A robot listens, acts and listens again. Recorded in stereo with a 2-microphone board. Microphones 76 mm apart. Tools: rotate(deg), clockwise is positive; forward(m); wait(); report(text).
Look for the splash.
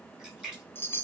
rotate(15)
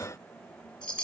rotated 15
wait()
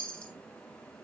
report("I heard a splash, but can't make it out now. It was about straight ahead or 150° right.")